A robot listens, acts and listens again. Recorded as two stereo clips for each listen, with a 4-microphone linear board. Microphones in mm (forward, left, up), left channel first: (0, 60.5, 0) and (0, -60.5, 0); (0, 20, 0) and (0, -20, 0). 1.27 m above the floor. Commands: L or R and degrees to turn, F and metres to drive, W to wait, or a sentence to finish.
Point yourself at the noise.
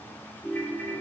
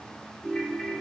L30
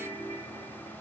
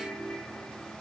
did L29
L135
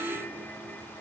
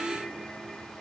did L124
L15
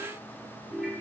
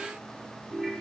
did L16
Facing the ringtone, 2 to 4 m away.